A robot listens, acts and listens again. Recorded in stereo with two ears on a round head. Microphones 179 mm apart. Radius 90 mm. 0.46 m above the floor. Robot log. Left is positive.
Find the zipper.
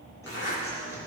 note: The zipper: about 60° left or 120° left.
cmd yaw +60
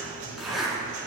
end: Found it: a zipper, straight ahead, over 4 m away.